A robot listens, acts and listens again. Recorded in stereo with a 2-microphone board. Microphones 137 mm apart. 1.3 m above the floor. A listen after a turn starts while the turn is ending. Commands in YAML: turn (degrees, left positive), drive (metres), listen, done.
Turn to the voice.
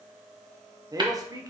turn: -25
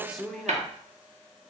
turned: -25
done: "Found it: a man speaking, straight ahead."